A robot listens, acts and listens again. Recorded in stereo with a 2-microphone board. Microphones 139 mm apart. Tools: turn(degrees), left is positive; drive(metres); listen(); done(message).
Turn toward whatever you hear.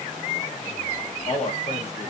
turn(degrees=50)
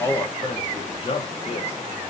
turn(degrees=40)
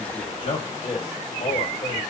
turn(degrees=45)
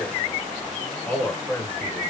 turn(degrees=10)
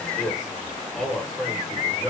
done("Found it: a man speaking, straight ahead, 1 to 2 m away.")